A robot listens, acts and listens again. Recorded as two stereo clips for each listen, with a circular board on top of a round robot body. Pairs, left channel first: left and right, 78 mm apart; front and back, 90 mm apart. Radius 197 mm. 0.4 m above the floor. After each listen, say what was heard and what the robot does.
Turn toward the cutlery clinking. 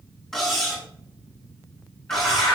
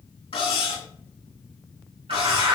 Facing the cutlery clinking.